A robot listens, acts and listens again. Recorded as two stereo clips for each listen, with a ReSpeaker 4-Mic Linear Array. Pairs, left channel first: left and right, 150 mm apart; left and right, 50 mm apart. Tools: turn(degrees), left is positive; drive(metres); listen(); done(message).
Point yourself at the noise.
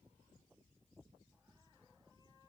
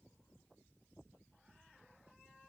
listen()
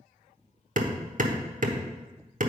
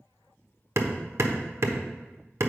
turn(degrees=-60)
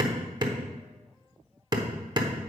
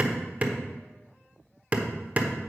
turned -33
turn(degrees=-30)
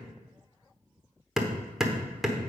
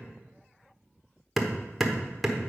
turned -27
done("Found it: hammering, straight ahead.")